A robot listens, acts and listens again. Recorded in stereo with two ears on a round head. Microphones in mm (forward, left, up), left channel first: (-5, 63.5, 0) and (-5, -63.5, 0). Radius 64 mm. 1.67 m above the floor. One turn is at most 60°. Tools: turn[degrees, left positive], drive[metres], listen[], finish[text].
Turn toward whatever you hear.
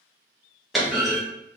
Action: turn[30]
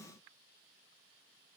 Action: listen[]
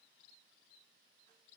Action: finish[I heard a clunk, but can't make it out now. It was about 30° right or 150° left.]